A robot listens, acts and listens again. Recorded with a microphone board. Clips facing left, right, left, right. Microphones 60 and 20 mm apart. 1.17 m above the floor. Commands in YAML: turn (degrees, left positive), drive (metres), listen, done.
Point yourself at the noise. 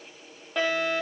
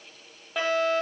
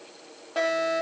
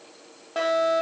turn: -30
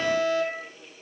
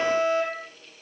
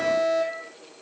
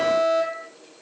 turn: -150
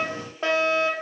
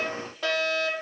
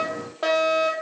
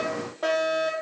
turn: 30
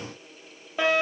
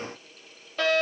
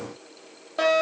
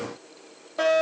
turn: 15
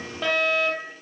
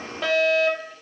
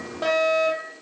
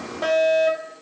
done: "Found it: a fire alarm, straight ahead."